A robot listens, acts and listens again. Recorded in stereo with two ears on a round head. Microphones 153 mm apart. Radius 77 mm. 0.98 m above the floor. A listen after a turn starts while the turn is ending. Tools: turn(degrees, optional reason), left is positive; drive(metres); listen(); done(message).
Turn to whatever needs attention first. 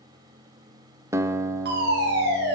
turn(degrees=-65, reason="The fire alarm: about 65° right or 115° right.")
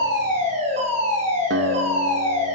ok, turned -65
turn(degrees=-45, reason="So it is at 45° right.")
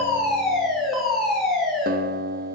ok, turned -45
done("Found it: a fire alarm, straight ahead, over 4 m away.")